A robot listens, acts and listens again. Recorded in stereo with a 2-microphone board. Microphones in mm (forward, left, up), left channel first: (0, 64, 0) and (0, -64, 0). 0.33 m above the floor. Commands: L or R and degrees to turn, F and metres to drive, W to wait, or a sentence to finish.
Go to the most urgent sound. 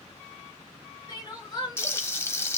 L35
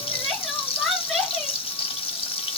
F1.0
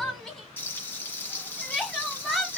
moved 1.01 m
F1.0
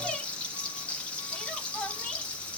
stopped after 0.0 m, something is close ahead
L10
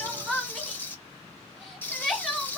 I am next to the crying.